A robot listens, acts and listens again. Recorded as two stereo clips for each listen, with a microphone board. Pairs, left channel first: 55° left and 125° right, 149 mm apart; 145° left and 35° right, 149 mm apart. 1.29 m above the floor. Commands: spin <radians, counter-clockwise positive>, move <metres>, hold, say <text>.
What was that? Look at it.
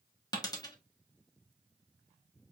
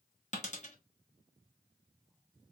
spin 2.01
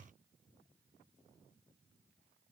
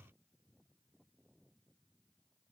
say Facing where the dropped coin came from. I can't hear it now.